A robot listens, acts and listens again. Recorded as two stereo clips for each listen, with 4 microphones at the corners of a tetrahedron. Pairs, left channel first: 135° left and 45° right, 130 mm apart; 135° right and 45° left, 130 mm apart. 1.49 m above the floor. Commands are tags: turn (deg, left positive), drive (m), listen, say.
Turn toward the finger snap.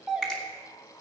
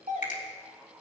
<turn deg="-140"/>
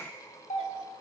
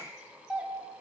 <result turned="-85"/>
<turn deg="-55"/>
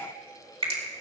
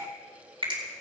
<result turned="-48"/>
<say>Found it: a finger snap, straight ahead.</say>